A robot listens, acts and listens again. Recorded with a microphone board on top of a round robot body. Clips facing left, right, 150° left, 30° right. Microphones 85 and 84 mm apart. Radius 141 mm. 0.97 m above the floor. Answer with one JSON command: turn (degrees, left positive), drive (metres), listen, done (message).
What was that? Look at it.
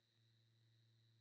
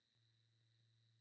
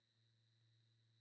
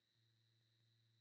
{"listen": true}
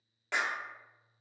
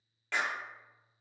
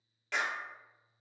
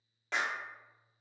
{"turn": 20}
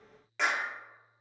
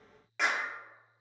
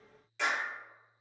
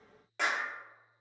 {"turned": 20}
{"done": "Found it: a clap, straight ahead, under 1 m away."}